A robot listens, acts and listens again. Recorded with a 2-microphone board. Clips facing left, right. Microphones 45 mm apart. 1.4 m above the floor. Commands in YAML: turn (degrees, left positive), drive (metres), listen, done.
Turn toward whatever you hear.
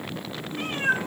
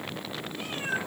turn: 55
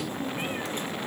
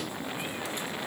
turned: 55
listen: true
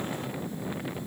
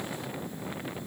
listen: true
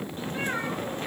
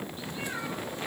turn: 50
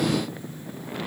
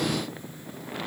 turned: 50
listen: true
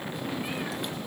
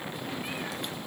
listen: true
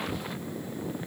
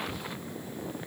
done: "I heard a cat meowing from this way, but can't make it out now."